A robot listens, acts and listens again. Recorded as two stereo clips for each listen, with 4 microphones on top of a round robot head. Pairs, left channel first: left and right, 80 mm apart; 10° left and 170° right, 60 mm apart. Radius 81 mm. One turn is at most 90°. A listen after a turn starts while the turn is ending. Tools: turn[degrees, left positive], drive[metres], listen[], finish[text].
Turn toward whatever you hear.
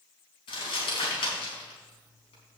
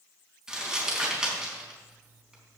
Thought: The crumpling: 110° left.
Action: turn[90]
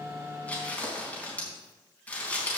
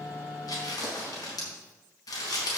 Thought: The crumpling is now 15° left.
Action: turn[15]
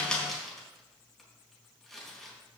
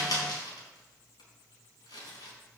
Action: finish[Facing the crumpling, over 4 m away.]